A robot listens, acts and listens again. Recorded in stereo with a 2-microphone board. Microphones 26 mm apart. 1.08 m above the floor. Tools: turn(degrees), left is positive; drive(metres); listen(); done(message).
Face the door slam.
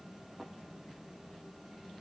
listen()
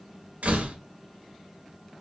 turn(degrees=-90)
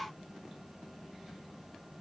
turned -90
done("I heard a door slam from this way, but can't make it out now.")